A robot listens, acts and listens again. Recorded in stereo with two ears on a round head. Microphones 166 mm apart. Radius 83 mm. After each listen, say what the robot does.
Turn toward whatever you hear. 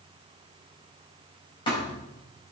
Turn 30° left.
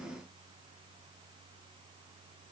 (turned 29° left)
Keep listening.
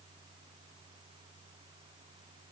I heard a thud, but can't make it out now. It was about straight ahead or 125° left.